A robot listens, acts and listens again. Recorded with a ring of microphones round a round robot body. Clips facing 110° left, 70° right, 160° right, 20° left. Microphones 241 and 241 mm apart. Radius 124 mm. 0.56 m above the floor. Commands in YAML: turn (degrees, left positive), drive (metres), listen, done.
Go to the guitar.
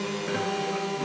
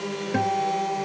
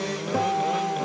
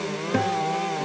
turn: -35
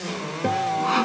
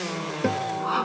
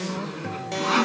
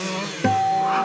drive: 1.0
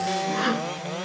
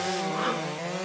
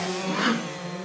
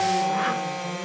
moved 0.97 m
listen: true
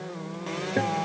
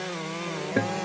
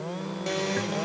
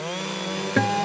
drive: 1.0
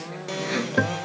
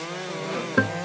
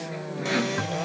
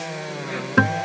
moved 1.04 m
turn: 10
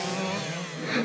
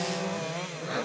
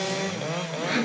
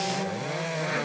drive: 1.0
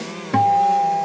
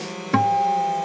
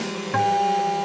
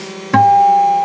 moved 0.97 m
turn: 10
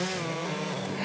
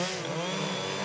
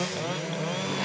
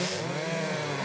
listen: true
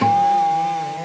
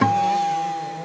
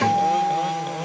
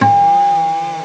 drive: 1.0
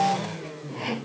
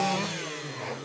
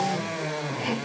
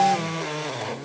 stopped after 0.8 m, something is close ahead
done: "I am next to the guitar."